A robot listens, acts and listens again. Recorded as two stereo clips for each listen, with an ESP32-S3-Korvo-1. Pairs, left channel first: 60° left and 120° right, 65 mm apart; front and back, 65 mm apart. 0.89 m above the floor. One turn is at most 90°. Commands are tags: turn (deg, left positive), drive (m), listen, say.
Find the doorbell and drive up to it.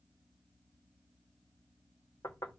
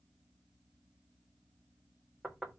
<listen/>
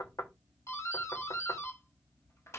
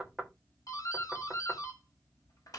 <turn deg="20"/>
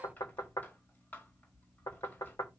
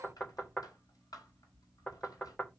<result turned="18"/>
<drive m="1.0"/>
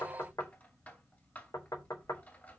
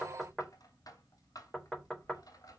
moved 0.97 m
<drive m="1.0"/>
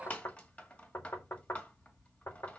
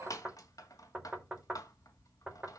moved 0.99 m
<drive m="1.0"/>
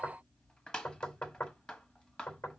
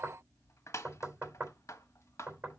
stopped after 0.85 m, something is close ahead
<turn deg="-15"/>
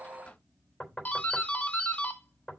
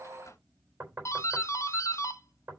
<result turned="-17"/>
<say>Arrived at the doorbell, straight ahead.</say>